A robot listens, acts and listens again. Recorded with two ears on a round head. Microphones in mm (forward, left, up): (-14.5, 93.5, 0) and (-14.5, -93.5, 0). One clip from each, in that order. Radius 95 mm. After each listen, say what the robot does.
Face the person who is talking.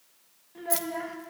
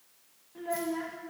Turn 30° left.
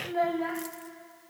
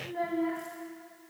Turn 135° left.
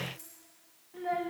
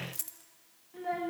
Found it: a child speaking, straight ahead.